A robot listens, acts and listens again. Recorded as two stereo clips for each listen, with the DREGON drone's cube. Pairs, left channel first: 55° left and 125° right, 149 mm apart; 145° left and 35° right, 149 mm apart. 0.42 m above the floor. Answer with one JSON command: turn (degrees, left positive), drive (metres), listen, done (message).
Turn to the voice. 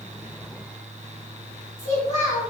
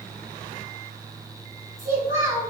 {"turn": 40}
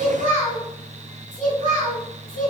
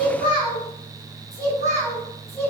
{"turn": 35}
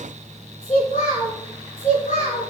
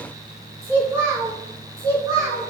{"turn": 20}
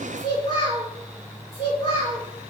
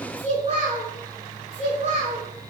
{"done": "Facing the child speaking, 2 to 4 m away."}